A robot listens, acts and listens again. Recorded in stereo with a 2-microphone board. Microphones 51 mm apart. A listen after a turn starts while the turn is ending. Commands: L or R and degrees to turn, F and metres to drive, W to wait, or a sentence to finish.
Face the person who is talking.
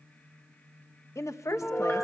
L75
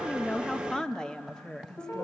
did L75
L15
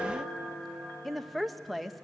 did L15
Facing the woman speaking.